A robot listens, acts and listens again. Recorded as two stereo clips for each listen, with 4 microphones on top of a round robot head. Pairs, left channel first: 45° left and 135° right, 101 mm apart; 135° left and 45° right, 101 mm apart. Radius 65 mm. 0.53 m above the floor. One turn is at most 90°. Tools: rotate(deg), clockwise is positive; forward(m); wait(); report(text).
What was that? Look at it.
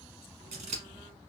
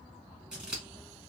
rotate(90)
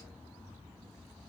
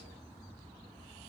rotate(35)
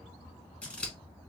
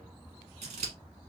rotate(30)
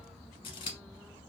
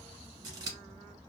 rotate(-10)
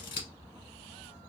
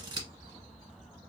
report("Found it: scissors, straight ahead, 1 to 2 m away.")